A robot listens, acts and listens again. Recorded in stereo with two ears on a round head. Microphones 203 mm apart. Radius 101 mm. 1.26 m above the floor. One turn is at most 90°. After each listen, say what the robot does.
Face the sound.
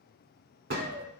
Turn 45° right.
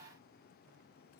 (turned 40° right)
Keep listening.
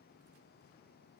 I heard a gunshot, but can't make it out now. It was about 5° right or 95° right.